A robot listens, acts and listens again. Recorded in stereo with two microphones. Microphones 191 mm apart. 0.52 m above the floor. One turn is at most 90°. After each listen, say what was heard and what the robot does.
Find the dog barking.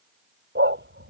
The dog barking: about 70° right or 110° right. Turn 70° right.
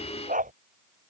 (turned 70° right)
So it is at 45° right. Turn 45° right.
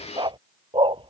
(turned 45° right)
The dog barking is now 25° right. Turn 25° right.
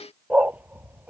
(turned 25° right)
The dog barking is now 10° right. Turn 10° right.
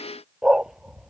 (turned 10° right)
Found it: a dog barking, straight ahead.